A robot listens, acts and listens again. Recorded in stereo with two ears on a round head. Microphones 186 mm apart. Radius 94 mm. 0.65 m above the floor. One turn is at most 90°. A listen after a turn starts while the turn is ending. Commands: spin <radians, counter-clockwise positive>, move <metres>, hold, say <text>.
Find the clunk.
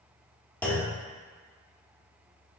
spin 0.52
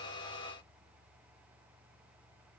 hold
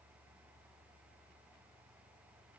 say I heard a clunk, but can't make it out now. It was about 20° right or 140° left.